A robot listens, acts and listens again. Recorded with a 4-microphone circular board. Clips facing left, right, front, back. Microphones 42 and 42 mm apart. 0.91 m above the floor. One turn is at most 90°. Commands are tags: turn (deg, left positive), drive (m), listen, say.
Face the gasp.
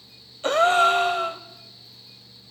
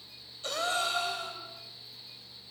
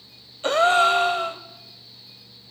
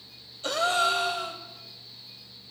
<turn deg="50"/>
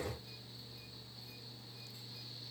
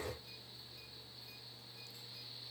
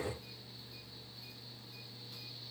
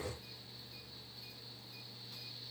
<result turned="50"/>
<say>I heard a gasp from this way, but can't make it out now.</say>